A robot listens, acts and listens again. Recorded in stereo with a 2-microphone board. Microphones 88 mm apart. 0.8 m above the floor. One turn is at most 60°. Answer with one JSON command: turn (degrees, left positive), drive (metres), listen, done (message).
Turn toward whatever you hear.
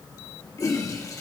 {"turn": 35}
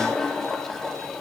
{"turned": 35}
{"done": "Found it: a toilet flushing, straight ahead."}